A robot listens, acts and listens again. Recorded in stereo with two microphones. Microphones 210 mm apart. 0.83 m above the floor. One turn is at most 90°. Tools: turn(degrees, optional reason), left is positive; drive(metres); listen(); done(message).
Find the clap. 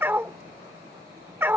listen()
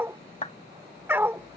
turn(degrees=30, reason="The clap: about 30° left or 150° left.")
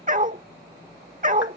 listen()
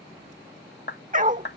turn(degrees=90, reason="So it is at 115° left.")
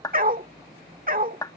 turn(degrees=20, reason="The clap is now 20° left.")
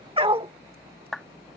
done("Facing the clap.")